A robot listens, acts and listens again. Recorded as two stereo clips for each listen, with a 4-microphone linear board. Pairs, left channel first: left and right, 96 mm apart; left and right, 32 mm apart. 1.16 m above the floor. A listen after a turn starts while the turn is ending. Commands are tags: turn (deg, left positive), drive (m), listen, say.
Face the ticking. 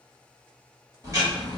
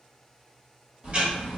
<turn deg="-35"/>
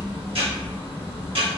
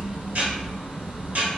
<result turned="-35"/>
<turn deg="-110"/>
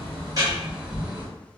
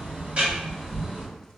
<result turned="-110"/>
<turn deg="-20"/>
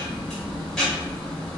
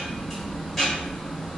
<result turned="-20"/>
<say>Facing the ticking.</say>